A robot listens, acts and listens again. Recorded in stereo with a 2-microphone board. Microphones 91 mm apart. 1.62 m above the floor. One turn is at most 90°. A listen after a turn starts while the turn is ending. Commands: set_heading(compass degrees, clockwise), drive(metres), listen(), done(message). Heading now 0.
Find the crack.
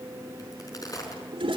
set_heading(320)
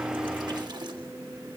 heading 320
listen()
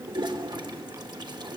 done("I heard a crack, but can't make it out now. It was about straight ahead or 100° left.")